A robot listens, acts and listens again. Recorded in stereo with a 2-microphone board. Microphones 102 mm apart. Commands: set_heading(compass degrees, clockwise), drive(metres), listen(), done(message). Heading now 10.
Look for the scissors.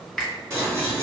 set_heading(35)
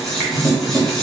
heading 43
done("Found it: scissors, straight ahead, under 1 m away.")